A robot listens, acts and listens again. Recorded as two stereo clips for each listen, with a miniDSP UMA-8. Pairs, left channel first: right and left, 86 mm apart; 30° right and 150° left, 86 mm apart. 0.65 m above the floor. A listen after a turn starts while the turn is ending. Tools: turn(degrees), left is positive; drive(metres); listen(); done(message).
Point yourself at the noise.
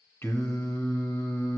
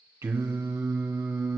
turn(degrees=-150)
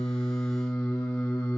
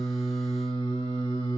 turn(degrees=-25)
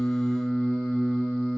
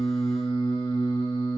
done("Facing the singing.")